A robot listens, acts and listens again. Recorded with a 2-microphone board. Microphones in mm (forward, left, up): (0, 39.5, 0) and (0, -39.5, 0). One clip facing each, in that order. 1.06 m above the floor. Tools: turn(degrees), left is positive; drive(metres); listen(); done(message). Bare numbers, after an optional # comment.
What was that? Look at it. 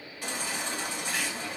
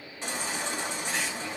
# The baby crying: about 25° right or 155° right.
turn(-25)
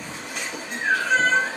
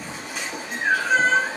done("Facing the baby crying, 1 to 2 m away.")